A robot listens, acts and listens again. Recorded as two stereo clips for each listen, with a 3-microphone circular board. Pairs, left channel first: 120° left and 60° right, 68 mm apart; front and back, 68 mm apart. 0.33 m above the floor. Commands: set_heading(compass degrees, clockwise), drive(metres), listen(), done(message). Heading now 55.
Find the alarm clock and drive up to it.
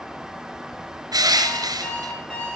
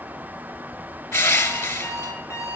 set_heading(10)
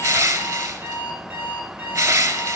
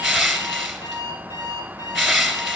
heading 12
drive(1.0)
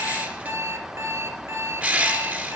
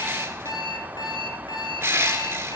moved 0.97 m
set_heading(22)
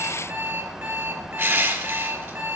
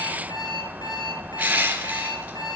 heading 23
drive(1.0)
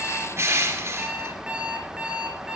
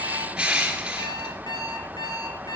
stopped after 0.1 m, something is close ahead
set_heading(8)
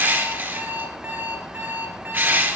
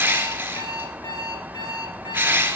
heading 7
done("Something is in my way. I am facing the alarm clock but have not reached it.")